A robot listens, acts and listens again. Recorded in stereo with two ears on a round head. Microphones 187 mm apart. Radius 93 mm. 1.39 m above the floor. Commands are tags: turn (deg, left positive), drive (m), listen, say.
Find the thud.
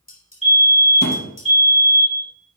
<turn deg="50"/>
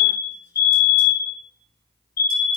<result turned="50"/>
<listen/>
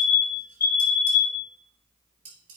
<say>I heard a thud, but can't make it out now. It was about straight ahead or 80° left.</say>